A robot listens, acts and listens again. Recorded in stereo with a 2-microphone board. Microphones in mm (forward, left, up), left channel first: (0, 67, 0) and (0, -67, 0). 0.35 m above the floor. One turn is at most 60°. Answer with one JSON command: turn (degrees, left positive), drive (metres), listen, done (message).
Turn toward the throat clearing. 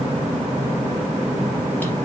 {"listen": true}
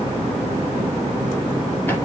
{"listen": true}
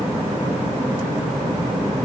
{"done": "I can't make out throat clearing to turn to."}